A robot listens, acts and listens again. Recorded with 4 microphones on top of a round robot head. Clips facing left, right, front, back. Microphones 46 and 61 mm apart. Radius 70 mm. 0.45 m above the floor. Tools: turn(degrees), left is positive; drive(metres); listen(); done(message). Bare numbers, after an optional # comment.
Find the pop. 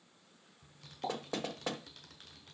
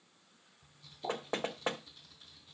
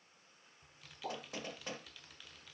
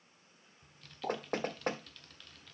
# The pop: 115° left.
turn(115)
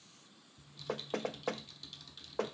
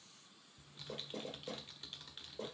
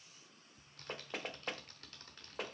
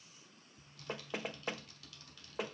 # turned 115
done("I heard a pop from this way, but can't make it out now.")